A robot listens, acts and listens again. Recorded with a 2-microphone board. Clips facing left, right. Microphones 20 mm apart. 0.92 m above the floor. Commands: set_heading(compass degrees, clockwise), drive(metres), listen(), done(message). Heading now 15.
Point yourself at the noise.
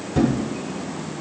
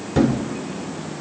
set_heading(40)
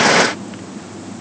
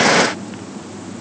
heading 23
listen()
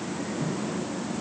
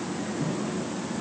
done("I heard a thud, but can't make it out now. It was about 20° right or 145° right.")